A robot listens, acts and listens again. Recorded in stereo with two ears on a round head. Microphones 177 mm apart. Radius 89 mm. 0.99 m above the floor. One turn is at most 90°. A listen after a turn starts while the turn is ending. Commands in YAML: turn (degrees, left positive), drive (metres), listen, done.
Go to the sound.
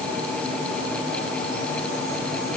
listen: true
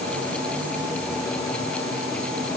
listen: true
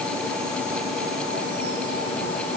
done: "I can't make out anything to turn to."